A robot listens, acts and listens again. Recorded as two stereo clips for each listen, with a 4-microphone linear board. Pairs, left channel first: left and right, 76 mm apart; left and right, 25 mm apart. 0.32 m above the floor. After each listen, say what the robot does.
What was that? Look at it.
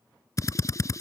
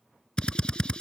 Turn 45° left.
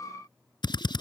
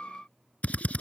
Turn 90° left.
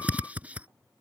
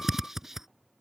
Turn 20° right.
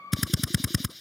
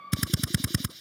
Facing the drill.